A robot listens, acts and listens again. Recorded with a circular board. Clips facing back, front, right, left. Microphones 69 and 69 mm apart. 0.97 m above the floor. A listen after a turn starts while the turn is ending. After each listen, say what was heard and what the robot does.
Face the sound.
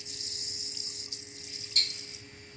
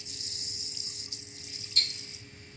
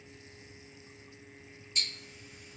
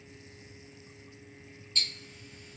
The ticking: 165° right. Turn 165° right.
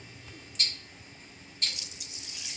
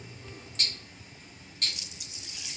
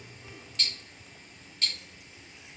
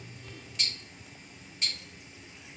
The ticking is now 15° left. Turn 15° left.
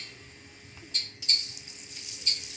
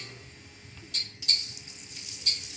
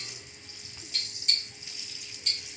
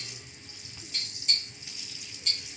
Found it: ticking, straight ahead, 1 to 2 m away.